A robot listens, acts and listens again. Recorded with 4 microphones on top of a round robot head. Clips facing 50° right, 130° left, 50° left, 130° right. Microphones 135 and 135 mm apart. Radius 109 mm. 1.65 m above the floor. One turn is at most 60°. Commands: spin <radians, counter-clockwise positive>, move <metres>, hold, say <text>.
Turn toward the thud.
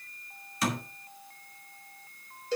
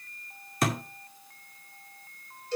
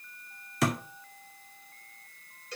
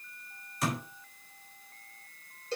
spin 1.05
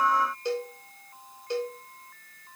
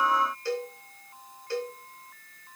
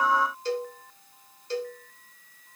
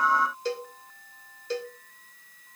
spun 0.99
spin 0.44
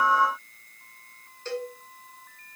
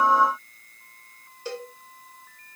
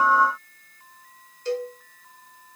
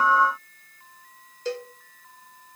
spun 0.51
say I heard a thud from this way, but can't make it out now.